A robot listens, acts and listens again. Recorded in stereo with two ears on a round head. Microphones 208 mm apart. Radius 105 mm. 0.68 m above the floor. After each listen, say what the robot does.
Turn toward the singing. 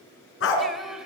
Turn 30° left.
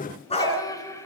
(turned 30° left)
Turn 165° left.
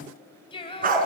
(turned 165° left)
Turn 20° left.
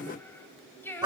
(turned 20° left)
Turn 10° left.
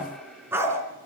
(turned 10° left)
Keep listening.
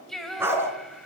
Facing the singing.